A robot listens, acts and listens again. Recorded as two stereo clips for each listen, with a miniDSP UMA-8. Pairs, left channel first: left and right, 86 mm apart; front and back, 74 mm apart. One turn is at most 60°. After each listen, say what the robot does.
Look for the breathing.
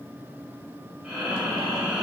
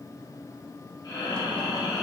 Turn 15° right.
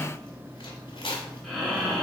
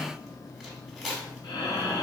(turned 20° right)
Facing the breathing.